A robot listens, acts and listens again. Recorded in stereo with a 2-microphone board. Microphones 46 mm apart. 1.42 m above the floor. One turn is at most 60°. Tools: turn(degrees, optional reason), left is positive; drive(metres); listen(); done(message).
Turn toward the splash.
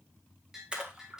turn(degrees=-20, reason="The splash: about 20° right or 160° right.")
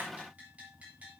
listen()
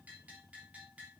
done("I heard a splash, but can't make it out now. It was about straight ahead or 140° right.")